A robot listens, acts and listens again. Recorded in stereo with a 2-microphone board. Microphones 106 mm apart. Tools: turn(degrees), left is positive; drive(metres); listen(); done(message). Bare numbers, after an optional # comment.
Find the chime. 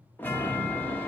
# The chime: about 15° left or 165° left.
turn(15)
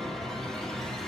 done("Facing the chime, 1 to 2 m away.")